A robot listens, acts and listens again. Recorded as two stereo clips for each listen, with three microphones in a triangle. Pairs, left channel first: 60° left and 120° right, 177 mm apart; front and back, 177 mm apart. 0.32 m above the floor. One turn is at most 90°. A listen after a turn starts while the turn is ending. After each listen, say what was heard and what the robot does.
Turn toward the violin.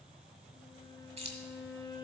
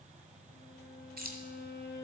Facing the violin.